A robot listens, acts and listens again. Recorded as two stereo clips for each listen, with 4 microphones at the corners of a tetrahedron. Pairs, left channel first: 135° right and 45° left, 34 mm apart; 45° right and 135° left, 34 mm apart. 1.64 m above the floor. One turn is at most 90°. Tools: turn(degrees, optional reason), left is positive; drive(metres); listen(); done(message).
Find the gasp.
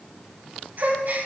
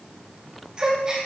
turn(degrees=65, reason="The gasp: 65° left.")
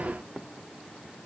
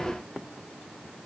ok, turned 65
done("I heard a gasp from this way, but can't make it out now.")